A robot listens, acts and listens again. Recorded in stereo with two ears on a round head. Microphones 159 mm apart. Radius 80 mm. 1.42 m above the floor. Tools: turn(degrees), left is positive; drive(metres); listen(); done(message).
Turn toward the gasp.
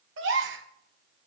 turn(degrees=-90)
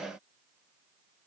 done("Facing where the gasp came from. I can't hear it now.")